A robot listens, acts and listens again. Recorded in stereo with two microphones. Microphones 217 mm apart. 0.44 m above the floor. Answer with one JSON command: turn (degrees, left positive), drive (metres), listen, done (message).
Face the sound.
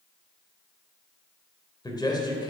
{"turn": 20}
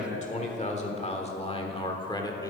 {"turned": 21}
{"turn": 15}
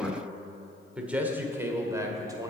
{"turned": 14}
{"turn": -15}
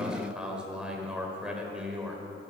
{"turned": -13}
{"done": "Found it: a man speaking, straight ahead, 1 to 2 m away."}